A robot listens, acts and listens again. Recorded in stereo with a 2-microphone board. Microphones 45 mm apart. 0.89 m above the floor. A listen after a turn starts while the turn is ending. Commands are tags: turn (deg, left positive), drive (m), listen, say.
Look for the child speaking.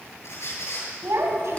<turn deg="-90"/>
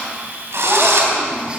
<listen/>
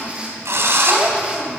<listen/>
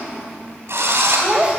<turn deg="-30"/>
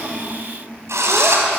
<listen/>
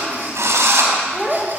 <say>Facing the child speaking.</say>